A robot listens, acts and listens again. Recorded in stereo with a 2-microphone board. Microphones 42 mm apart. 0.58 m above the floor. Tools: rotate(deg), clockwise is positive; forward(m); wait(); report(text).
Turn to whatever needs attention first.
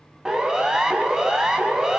rotate(15)
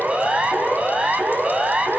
rotate(150)
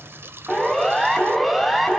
report("Facing the siren, over 4 m away.")